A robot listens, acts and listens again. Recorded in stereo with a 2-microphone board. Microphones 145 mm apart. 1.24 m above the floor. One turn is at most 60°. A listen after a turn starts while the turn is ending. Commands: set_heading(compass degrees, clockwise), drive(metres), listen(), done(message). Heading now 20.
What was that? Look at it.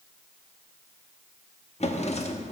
set_heading(330)
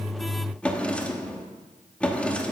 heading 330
set_heading(320)
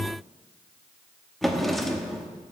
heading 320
done("Facing the drawer.")